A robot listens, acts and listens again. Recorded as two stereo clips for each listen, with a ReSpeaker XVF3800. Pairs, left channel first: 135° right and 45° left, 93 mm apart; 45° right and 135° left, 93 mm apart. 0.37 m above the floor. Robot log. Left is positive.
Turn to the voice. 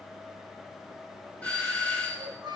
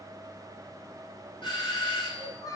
end: Found it: a child speaking, straight ahead.